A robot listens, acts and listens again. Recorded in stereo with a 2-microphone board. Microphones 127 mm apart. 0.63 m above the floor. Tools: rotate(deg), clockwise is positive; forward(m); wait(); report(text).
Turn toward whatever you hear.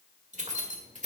rotate(90)
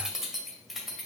report("Facing the keys jangling.")